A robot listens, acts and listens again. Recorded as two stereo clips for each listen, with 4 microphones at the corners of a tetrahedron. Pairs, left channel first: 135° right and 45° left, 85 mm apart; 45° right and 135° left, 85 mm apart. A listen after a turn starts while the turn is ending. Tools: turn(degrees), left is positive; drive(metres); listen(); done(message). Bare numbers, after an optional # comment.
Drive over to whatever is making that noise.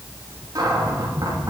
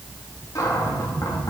drive(1.0)
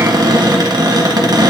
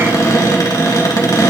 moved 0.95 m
drive(1.0)
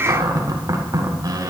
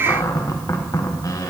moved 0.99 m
drive(1.0)
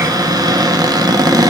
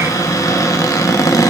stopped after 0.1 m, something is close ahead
done("I am next to the cupboard door.")